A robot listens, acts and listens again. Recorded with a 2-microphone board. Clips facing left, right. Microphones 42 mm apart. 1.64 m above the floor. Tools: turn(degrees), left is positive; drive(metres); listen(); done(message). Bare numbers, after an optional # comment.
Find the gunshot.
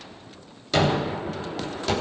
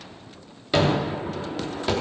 # The gunshot: about 20° right or 160° right.
turn(-20)
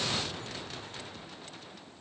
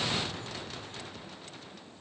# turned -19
listen()
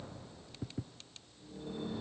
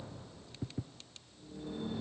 done("I heard a gunshot, but can't make it out now. It was about straight ahead or 145° right.")